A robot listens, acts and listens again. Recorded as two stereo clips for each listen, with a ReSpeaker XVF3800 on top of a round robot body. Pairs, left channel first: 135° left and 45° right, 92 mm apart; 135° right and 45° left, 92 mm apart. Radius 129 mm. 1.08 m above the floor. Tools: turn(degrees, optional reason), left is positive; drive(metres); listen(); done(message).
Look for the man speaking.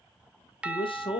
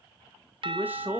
turn(degrees=115, reason="The man speaking: 115° left.")
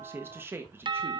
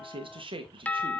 turn(degrees=20, reason="The man speaking is now 20° left.")
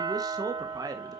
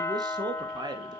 done("Facing the man speaking.")